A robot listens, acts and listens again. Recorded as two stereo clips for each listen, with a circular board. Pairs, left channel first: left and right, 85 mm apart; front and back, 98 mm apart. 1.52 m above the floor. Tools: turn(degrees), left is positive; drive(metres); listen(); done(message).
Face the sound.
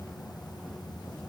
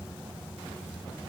listen()
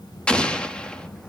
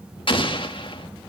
turn(degrees=15)
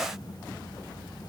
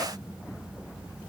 done("Facing where the explosion came from. I can't hear it now.")